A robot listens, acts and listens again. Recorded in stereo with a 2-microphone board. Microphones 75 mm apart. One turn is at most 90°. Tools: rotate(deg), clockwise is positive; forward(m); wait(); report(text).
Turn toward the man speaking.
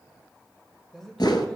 rotate(-30)
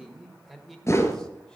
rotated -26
rotate(-30)
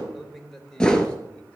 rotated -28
rotate(-30)
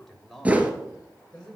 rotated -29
rotate(-15)
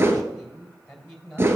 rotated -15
rotate(-30)
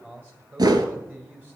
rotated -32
rotate(20)
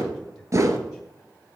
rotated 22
wait()
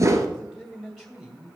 report("Found it: a man speaking, straight ahead, 2 to 4 m away.")